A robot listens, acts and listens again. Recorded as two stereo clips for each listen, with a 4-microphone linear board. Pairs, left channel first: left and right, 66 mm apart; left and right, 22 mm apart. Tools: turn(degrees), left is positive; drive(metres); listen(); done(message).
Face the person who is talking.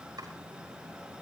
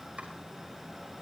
listen()
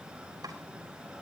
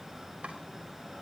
listen()
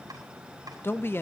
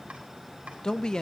turn(degrees=35)
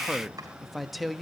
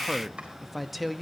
done("Found it: a man speaking, straight ahead.")